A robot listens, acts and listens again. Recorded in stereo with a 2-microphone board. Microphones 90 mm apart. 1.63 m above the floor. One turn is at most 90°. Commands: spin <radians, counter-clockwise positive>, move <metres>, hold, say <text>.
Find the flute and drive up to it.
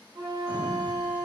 spin -1.13
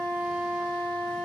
move 1.0
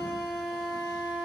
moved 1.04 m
move 1.0
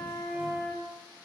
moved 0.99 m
move 1.0
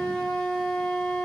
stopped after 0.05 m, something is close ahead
spin 0.17
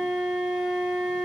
say Arrived at the flute, straight ahead.